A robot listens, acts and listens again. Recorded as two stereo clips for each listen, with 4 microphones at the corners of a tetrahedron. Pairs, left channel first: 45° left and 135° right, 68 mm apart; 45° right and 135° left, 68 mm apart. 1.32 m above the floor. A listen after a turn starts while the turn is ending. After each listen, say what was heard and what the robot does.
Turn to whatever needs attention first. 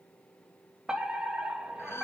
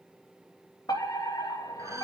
The fire alarm: 60° right. Turn 60° right.
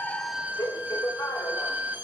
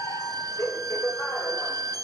Found it: a fire alarm, straight ahead.